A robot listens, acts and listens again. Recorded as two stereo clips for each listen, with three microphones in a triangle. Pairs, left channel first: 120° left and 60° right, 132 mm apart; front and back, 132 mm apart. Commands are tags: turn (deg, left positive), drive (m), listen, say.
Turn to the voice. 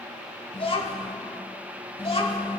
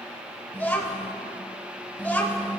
<turn deg="75"/>
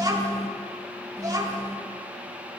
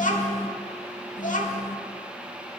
<say>Facing the child speaking.</say>